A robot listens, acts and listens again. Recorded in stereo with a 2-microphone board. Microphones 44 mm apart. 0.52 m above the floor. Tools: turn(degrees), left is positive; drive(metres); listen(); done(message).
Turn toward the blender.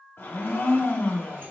turn(degrees=60)
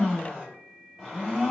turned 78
turn(degrees=-10)
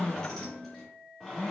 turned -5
done("Found it: a blender, straight ahead, 1 to 2 m away.")